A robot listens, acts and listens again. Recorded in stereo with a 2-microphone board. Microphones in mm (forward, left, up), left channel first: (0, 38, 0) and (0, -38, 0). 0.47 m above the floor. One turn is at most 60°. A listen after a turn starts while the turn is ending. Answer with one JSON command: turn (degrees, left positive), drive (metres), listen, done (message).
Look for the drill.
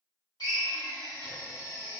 {"turn": 60}
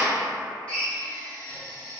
{"turn": 15}
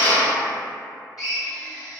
{"done": "Found it: a drill, straight ahead, under 1 m away."}